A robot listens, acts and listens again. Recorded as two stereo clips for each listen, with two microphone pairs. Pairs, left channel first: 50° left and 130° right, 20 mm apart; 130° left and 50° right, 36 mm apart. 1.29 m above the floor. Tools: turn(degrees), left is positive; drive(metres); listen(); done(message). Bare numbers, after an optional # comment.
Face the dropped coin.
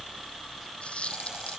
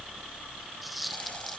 # The dropped coin: 40° left.
turn(40)
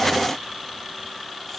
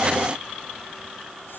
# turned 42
done("Facing where the dropped coin came from. I can't hear it now.")